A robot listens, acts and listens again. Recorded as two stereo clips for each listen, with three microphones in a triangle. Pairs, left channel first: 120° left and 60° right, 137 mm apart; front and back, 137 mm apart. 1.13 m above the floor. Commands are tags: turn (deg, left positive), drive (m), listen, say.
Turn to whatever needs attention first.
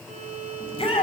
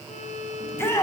<turn deg="70"/>
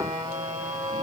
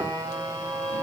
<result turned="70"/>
<listen/>
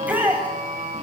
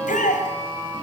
<turn deg="20"/>
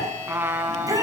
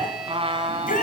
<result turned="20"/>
<say>Facing the shout, over 4 m away.</say>